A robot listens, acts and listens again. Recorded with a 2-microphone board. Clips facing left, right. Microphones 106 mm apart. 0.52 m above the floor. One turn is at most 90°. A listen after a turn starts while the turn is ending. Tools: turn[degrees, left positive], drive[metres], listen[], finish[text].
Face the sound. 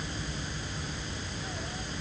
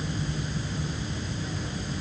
Action: listen[]
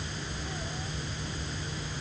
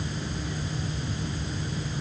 Action: listen[]
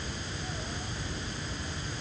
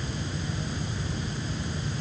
Action: finish[I can't make out anything to turn to.]